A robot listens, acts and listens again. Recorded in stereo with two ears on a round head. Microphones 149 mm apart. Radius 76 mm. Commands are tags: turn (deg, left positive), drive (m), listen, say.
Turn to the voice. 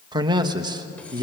<turn deg="-25"/>
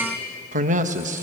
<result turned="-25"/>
<turn deg="-130"/>
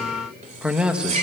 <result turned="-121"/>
<say>Facing the man speaking.</say>